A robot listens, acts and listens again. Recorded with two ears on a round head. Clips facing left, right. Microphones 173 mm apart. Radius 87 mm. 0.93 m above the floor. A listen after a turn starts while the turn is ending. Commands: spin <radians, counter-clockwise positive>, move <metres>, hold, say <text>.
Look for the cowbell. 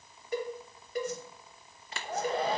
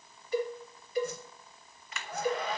spin 0.79
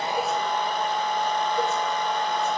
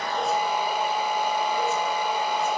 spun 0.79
hold
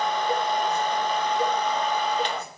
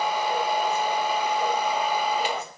hold
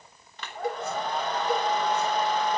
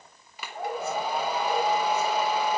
spin 1.57
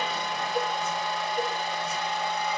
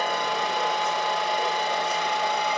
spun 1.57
hold
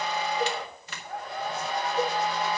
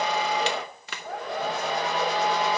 hold
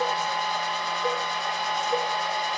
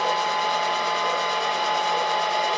say Facing where the cowbell came from. I can't hear it now.